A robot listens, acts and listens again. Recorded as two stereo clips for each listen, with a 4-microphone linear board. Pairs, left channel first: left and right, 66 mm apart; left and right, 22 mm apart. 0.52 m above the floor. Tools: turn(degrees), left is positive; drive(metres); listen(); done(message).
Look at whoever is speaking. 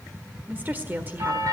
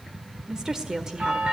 turn(degrees=-30)
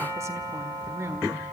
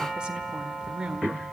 turn(degrees=-115)
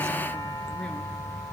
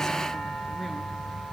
listen()
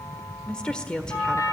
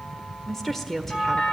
turn(degrees=15)
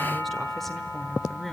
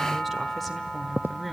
done("Found it: a woman speaking, straight ahead, 1 to 2 m away.")